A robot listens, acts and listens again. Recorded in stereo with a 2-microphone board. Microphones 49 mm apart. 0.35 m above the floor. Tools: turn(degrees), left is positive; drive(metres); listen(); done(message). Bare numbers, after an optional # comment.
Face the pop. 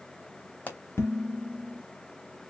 # The pop: about 35° left or 145° left.
turn(35)
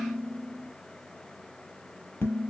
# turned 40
listen()
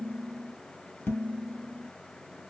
done("I heard a pop, but can't make it out now. It was about 5° right or 105° left.")